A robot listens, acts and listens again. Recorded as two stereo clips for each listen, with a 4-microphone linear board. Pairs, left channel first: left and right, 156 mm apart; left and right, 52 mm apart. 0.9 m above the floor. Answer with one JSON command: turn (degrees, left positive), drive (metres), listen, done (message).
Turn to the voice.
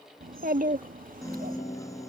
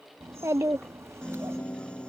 {"turn": -65}
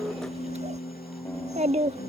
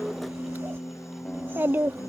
{"turn": -45}
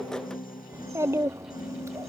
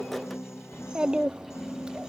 {"turn": -20}
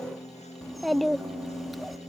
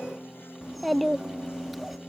{"done": "Found it: a child speaking, straight ahead."}